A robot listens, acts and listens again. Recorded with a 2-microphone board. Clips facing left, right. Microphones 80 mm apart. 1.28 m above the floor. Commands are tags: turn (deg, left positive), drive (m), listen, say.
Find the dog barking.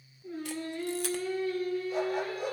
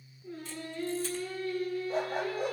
<turn deg="-40"/>
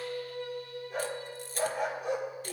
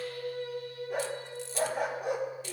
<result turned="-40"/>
<turn deg="-100"/>
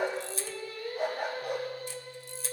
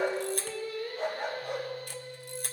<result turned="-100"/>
<turn deg="10"/>
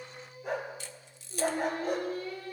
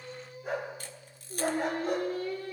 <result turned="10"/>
<say>Found it: a dog barking, straight ahead.</say>